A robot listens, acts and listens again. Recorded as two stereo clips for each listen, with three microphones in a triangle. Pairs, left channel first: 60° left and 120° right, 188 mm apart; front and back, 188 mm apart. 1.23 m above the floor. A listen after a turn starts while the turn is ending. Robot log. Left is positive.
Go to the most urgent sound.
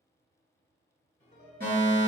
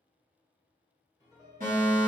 note: The fire alarm: 145° right.
cmd yaw -145
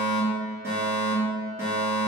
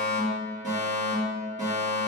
note: The fire alarm is now 45° right.
cmd yaw -45
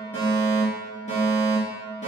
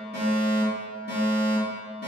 note: The fire alarm is now 15° left.
cmd yaw +15
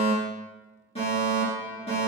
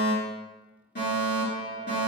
cmd fwd 1.0
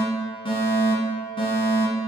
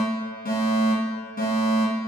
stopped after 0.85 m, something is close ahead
end: I am next to the fire alarm.